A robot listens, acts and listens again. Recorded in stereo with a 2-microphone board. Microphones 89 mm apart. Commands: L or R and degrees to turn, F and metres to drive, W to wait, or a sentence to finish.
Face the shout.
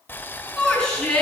L30
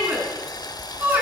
R20
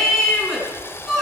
Facing the shout, over 4 m away.